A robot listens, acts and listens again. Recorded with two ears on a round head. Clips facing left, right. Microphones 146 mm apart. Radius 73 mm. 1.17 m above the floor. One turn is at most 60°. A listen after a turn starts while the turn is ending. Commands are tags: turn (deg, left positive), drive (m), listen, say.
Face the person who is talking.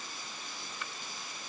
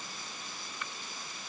<listen/>
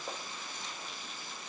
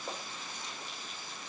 <listen/>
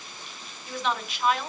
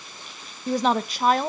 <turn deg="-35"/>
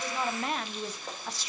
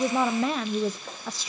<turn deg="-60"/>
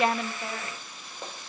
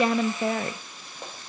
<turn deg="-40"/>
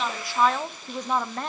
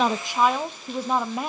<turn deg="-10"/>
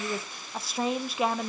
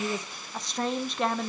<say>Found it: a woman speaking, straight ahead, under 1 m away.</say>